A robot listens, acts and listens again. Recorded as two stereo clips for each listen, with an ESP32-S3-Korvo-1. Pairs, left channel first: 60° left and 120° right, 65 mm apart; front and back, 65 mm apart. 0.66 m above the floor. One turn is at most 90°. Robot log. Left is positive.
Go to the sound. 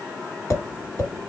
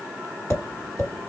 note: The tapping: 25° left.
cmd yaw +25
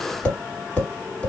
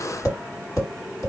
note: The tapping is now 10° right.
cmd yaw -10
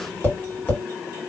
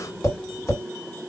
cmd fwd 1.0
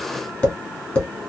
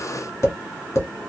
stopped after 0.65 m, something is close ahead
end: I am next to the tapping.